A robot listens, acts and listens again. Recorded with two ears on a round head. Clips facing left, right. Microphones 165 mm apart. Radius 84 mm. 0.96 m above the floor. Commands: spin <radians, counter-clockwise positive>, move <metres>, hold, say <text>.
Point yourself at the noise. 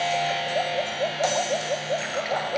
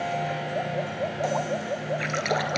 spin -1.05
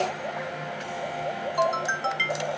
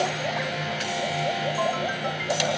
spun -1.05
hold
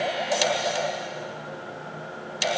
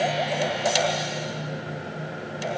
say I heard a splash, but can't make it out now. It was about straight ahead or 60° right.